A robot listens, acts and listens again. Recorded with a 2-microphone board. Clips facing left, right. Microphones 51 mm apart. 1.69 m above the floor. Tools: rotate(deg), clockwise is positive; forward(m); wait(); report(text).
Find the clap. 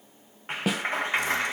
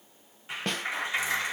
rotate(-40)
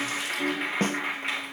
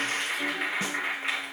report("Found it: a clap, straight ahead, 1 to 2 m away.")